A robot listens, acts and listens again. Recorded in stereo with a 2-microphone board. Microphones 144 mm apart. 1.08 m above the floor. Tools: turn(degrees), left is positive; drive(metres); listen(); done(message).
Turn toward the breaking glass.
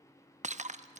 turn(degrees=-55)
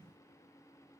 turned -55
listen()
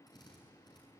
done("I heard breaking glass, but can't make it out now. It was about straight ahead or 70° right.")